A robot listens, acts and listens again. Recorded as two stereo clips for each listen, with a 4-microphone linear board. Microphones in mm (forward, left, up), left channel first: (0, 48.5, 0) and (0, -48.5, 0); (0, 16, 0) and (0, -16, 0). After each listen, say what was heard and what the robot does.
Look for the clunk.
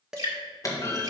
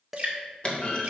The clunk: about 35° left or 145° left. Turn 35° left.
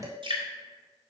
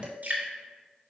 Keep listening.
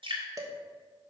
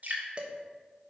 I heard a clunk, but can't make it out now. It was about straight ahead or 110° left.